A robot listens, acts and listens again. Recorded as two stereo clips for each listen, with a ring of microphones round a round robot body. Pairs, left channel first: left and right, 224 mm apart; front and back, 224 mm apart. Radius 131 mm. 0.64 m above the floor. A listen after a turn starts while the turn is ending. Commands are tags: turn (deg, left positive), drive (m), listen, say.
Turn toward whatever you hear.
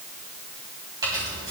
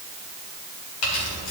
<turn deg="-15"/>
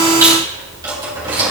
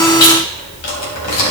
<turn deg="-20"/>
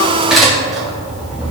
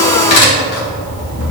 <say>Facing the keys jangling, 2 to 4 m away.</say>